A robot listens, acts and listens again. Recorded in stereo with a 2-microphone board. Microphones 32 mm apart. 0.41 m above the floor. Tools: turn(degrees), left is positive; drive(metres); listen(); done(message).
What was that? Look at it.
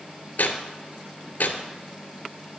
turn(degrees=90)
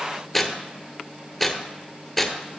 turn(degrees=10)
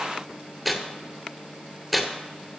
done("Facing the tearing paper, 1 to 2 m away.")